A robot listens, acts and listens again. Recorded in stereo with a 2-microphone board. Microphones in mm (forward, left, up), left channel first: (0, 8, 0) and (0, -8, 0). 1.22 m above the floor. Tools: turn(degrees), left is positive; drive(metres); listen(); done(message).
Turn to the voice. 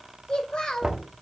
turn(degrees=90)
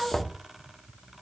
done("Facing the child speaking.")